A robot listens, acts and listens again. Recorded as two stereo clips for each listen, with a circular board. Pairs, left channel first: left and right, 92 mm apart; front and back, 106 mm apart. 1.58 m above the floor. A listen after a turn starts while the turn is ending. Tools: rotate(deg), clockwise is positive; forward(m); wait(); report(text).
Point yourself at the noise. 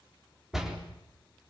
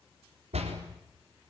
rotate(175)
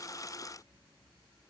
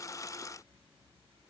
report("I heard a door slam from this way, but can't make it out now.")